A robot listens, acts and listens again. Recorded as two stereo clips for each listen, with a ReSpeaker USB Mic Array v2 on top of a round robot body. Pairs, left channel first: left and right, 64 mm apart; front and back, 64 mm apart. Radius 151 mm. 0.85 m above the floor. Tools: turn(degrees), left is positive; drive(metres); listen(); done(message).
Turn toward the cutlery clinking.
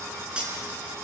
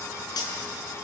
turn(degrees=-15)
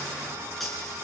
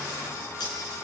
done("Facing the cutlery clinking, over 4 m away.")